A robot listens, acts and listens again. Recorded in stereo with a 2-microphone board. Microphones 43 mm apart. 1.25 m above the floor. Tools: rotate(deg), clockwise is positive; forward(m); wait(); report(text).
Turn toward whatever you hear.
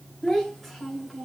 rotate(-30)
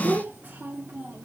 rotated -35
rotate(50)
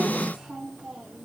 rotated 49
rotate(20)
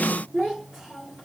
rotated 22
report("Facing the child speaking, 2 to 4 m away.")